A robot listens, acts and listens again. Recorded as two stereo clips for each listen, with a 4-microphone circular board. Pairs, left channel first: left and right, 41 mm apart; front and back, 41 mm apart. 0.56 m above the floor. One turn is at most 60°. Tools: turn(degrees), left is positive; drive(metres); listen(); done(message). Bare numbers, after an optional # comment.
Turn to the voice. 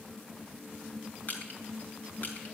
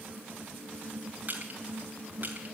listen()
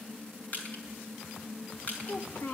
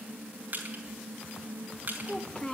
# The child speaking: 70° left.
turn(60)
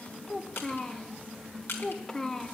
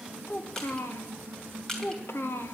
# The child speaking is now 15° left.
turn(15)
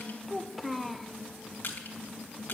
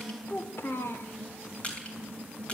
done("Facing the child speaking.")